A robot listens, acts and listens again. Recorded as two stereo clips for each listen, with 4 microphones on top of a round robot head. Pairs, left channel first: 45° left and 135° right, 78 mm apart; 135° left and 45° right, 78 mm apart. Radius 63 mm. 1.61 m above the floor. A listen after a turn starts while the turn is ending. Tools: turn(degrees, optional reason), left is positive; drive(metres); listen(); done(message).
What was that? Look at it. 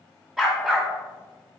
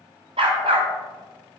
turn(degrees=-55, reason="The dog barking: 55° right.")
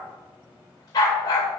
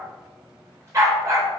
done("Facing the dog barking, 2 to 4 m away.")